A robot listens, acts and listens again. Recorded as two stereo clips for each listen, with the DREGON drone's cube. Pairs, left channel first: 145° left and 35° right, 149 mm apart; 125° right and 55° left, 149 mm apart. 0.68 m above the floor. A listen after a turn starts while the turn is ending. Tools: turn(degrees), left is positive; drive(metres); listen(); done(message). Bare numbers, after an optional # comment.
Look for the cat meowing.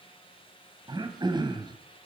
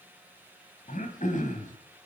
listen()
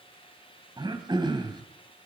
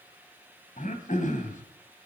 listen()
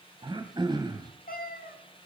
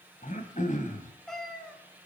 # The cat meowing: 150° left.
turn(150)
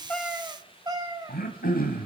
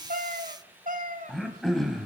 # The cat meowing is now 30° left.
turn(30)
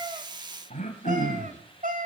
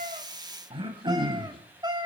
done("Found it: a cat meowing, straight ahead.")